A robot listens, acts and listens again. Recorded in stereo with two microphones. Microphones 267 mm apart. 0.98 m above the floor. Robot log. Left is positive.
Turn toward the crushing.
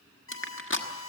note: The crushing: about 45° left or 135° left.
cmd yaw +45
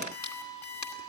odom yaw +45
note: So it is at 90° left.
cmd yaw +90
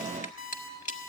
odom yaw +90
note: The crushing is now 30° left.
cmd yaw +30
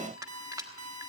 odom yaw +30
note: The crushing is now 10° right.
cmd yaw -10
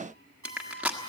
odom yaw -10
end: Facing the crushing, 1 to 2 m away.